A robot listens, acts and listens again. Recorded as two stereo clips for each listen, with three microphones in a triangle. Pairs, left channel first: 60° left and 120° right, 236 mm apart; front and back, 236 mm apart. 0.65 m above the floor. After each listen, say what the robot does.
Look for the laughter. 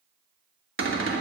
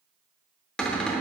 Keep listening.
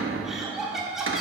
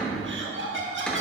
Turn 150° left.
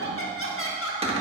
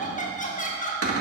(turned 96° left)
Turn 55° left.
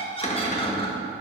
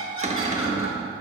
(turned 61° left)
Facing the laughter, 1 to 2 m away.